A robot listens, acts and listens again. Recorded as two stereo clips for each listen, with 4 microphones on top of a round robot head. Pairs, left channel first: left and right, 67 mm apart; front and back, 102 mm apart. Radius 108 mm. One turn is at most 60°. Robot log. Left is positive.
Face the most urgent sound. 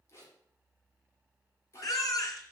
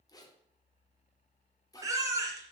note: The baby crying: 120° left.
cmd yaw +60
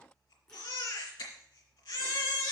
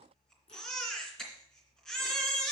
note: The baby crying is now 85° left.
cmd yaw +60
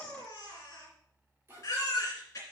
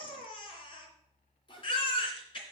note: The baby crying is now 35° left.
cmd yaw +35
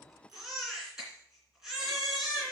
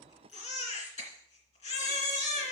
end: Found it: a baby crying, straight ahead.